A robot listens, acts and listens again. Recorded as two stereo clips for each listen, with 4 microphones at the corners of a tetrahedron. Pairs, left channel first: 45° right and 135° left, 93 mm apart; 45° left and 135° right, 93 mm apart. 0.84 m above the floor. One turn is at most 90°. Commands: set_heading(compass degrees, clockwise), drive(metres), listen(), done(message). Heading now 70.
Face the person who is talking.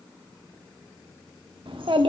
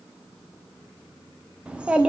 set_heading(340)
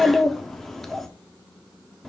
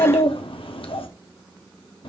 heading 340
set_heading(300)
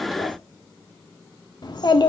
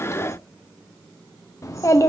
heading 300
set_heading(310)
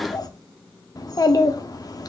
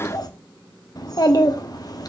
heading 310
done("Found it: a child speaking, straight ahead.")